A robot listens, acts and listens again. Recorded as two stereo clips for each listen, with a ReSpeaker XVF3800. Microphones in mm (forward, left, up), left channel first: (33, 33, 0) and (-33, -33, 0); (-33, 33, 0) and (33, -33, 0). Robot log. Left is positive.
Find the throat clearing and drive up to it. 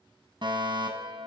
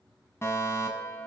cmd idle
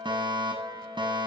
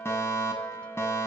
cmd idle
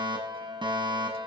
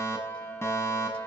end: I can't make out throat clearing to turn to.